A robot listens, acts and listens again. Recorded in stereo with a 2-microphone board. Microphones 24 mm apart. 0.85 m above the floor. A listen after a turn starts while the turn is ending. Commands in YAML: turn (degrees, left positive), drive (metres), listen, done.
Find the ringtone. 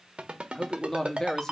turn: -50
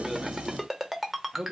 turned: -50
done: "Found it: a ringtone, straight ahead, 1 to 2 m away."